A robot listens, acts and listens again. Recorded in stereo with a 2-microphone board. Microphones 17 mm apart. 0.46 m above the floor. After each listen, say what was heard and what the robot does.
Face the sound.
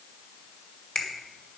The finger snap: about 45° left or 135° left. Turn 45° left.
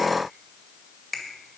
Facing the finger snap.